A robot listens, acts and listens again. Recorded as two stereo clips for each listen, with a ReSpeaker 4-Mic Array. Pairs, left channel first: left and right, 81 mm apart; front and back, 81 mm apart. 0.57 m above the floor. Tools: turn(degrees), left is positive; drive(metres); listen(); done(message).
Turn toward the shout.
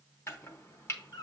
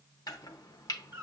listen()
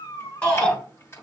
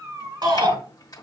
turn(degrees=160)
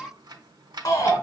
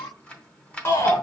turn(degrees=50)
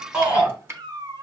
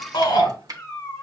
turn(degrees=-20)
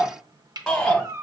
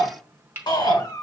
done("Found it: a shout, straight ahead.")